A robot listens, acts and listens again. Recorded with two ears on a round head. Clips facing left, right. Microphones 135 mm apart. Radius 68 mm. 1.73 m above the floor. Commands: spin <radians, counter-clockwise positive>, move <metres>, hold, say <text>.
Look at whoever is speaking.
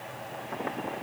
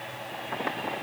hold
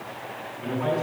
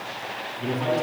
spin -0.79
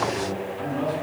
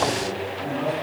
say Facing the man speaking, over 4 m away.